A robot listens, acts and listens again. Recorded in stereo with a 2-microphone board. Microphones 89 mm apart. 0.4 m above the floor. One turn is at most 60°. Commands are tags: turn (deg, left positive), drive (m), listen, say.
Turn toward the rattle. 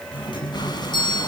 <listen/>
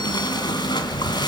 <listen/>
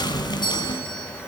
<say>I can't make out a rattle to turn to.</say>